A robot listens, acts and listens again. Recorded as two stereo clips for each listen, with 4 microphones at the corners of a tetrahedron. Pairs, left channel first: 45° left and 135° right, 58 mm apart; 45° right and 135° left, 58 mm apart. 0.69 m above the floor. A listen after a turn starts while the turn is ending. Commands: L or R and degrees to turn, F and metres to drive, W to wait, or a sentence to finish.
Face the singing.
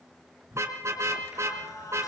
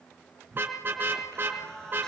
L35
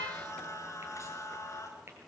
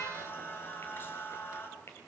L10
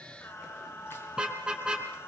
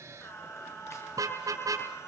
Facing the singing.